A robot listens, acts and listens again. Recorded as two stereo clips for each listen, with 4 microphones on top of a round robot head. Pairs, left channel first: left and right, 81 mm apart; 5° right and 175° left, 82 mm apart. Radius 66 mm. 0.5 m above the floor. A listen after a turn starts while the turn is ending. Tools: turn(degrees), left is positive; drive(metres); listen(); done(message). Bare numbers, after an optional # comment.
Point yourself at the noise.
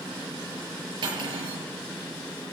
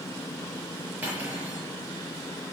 # The cutlery clinking: 115° right.
turn(-115)
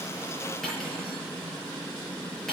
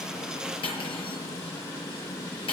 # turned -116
done("Found it: cutlery clinking, straight ahead.")